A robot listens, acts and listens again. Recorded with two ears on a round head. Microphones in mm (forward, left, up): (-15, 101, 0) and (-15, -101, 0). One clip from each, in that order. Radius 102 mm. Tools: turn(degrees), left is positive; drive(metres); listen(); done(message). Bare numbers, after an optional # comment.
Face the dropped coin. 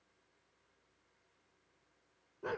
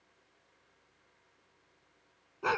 listen()
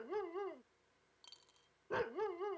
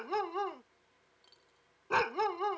# The dropped coin: about 45° left or 135° left.
turn(45)
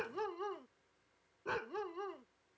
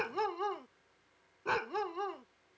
listen()
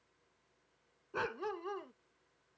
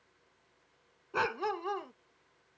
done("I heard a dropped coin, but can't make it out now. It was about straight ahead or 90° left.")